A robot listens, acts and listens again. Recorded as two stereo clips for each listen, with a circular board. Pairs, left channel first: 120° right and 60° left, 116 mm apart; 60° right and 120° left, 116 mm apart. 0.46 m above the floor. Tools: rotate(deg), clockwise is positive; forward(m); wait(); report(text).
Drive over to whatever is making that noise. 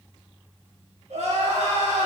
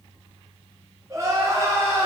rotate(-55)
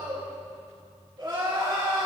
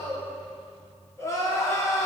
forward(1.0)
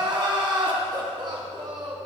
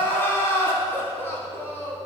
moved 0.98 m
rotate(-10)
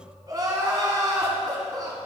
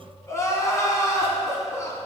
forward(1.0)
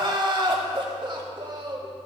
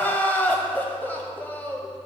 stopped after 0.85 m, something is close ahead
rotate(-15)
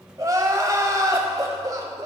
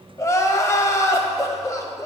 report("I am next to the crying.")